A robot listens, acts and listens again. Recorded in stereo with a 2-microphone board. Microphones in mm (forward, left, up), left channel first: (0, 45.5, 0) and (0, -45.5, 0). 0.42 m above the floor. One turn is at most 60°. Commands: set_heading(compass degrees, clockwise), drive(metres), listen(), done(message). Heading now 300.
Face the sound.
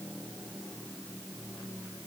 listen()
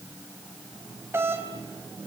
set_heading(330)
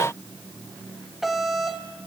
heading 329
done("Found it: a doorbell, straight ahead, 2 to 4 m away.")